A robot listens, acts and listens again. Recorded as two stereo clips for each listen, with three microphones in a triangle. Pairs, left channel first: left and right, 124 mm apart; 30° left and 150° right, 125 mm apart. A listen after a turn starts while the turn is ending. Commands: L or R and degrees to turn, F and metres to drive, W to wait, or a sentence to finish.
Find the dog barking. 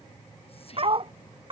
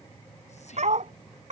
R130
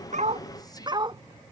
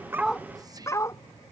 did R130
R40
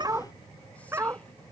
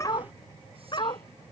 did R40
R20
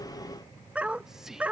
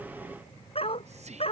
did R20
R10
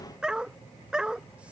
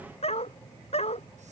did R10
Facing the dog barking.